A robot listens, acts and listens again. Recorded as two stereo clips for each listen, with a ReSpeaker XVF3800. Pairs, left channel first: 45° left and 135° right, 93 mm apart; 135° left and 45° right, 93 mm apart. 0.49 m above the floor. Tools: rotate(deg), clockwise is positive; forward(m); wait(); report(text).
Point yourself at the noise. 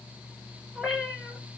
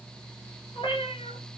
rotate(-140)
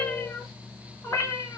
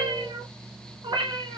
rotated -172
rotate(15)
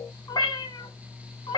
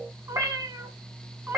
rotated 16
rotate(-20)
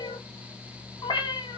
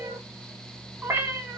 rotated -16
rotate(-20)
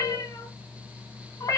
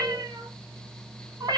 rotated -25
report("Found it: a cat meowing, straight ahead.")